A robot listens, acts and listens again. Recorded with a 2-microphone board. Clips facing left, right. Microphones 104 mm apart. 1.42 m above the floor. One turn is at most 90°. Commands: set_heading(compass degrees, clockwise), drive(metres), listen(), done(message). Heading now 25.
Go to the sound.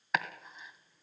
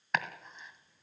set_heading(355)
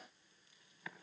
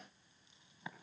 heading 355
listen()
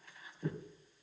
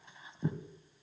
set_heading(20)
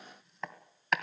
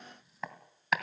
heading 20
drive(1.0)
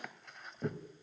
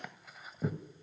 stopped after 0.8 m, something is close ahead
done("Arrived at the chopping, straight ahead.")